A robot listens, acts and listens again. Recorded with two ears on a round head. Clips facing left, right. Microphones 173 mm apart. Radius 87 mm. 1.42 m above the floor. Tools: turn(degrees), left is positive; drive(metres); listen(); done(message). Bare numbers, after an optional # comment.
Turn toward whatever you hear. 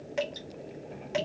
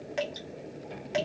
turn(-30)
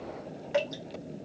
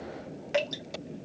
# So it is at 150° right.
turn(-150)
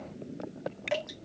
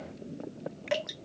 # The dripping is now 10° right.
turn(-10)
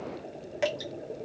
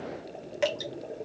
done("Facing the dripping.")